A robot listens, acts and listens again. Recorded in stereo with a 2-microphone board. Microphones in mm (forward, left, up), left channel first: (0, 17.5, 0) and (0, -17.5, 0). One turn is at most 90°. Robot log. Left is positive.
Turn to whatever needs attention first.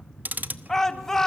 cmd yaw +30
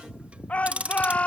note: So it is at 140° left.
cmd yaw +90
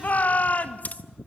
note: The shout is now 45° left.
cmd yaw +45
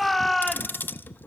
end: Facing the shout, 2 to 4 m away.